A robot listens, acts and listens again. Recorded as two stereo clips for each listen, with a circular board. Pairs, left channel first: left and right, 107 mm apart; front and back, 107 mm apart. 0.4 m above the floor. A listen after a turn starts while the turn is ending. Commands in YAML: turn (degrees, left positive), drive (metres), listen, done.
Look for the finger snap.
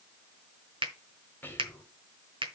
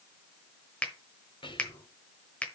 turn: -75
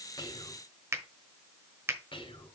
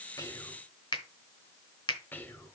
turn: -30
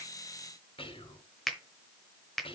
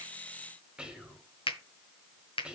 done: "Facing the finger snap, 1 to 2 m away."